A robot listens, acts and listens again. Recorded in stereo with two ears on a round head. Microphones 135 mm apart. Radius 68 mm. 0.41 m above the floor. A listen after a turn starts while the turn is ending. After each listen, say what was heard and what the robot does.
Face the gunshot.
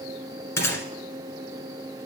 The gunshot: about 20° left or 160° left. Turn 20° left.
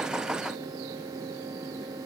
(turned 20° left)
Keep listening.
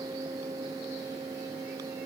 I heard a gunshot, but can't make it out now. It was about straight ahead or 140° left.